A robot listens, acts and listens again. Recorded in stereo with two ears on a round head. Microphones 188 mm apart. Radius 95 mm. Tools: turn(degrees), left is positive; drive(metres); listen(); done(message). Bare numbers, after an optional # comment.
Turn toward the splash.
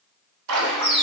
turn(-90)
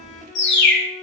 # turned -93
done("Facing where the splash came from. I can't hear it now.")